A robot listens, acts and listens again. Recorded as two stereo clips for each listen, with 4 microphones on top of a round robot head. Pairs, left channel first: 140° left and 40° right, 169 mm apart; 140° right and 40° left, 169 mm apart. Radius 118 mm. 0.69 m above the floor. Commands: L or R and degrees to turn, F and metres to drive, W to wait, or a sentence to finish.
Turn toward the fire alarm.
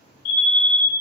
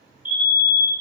L115
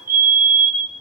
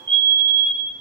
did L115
R20
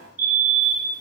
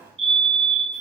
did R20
R10
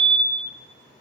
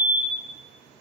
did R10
Facing the fire alarm.